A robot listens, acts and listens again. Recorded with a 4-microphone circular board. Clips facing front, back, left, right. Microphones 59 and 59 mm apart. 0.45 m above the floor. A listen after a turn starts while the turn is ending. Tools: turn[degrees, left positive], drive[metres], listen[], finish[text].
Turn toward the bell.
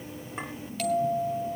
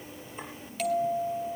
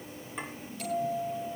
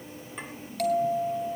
Thought: The bell: 90° right.
Action: turn[-90]
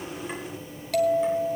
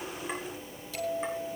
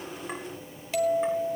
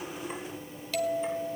Thought: The bell is now 25° left.
Action: turn[25]
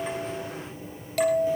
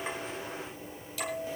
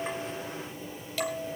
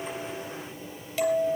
Thought: The bell is now 10° right.
Action: turn[-10]
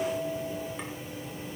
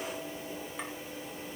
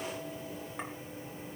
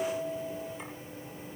Action: listen[]
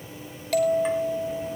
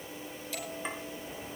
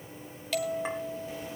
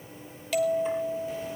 Action: finish[Facing the bell, 2 to 4 m away.]